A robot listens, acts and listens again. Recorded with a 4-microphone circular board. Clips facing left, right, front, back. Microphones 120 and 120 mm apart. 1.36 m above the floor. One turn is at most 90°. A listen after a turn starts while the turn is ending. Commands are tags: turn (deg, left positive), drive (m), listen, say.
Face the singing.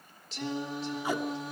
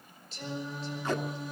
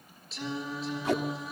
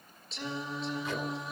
<turn deg="90"/>
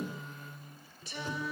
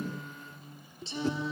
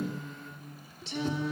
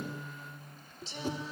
<turn deg="-25"/>
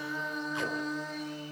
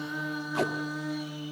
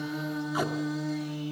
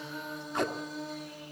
<turn deg="-10"/>
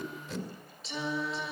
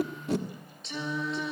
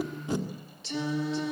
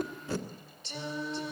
<say>Facing the singing.</say>